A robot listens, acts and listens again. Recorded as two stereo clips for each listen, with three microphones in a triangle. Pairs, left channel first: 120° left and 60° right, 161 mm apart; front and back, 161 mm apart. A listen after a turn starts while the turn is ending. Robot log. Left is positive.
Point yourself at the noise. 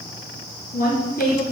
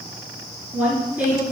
note: The woman speaking: 105° left.
cmd yaw +105
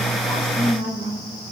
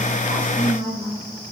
note: The woman speaking is now 20° right.
cmd yaw -20
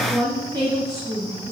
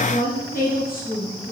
note: The woman speaking is now 10° left.
cmd yaw +10
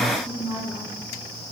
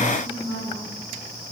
end: Facing the woman speaking, 2 to 4 m away.